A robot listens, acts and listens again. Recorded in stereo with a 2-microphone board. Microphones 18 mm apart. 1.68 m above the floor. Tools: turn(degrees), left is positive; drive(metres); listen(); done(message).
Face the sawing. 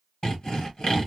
turn(degrees=50)
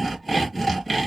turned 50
turn(degrees=10)
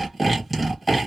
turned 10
done("Facing the sawing, 1 to 2 m away.")